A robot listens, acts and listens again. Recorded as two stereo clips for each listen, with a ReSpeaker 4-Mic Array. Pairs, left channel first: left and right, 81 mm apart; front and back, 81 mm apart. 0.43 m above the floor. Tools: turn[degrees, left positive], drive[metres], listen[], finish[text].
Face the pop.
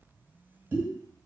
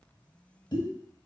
Thought: The pop: 30° right.
Action: turn[-30]
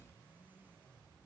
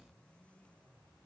Action: finish[I heard a pop from this way, but can't make it out now.]